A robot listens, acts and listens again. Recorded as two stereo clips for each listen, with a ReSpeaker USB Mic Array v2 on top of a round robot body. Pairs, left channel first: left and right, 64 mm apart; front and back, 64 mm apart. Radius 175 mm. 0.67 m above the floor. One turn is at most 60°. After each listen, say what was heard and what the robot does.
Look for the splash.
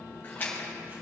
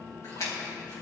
The splash: 35° left. Turn 35° left.
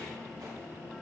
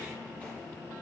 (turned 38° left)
I heard a splash from this way, but can't make it out now.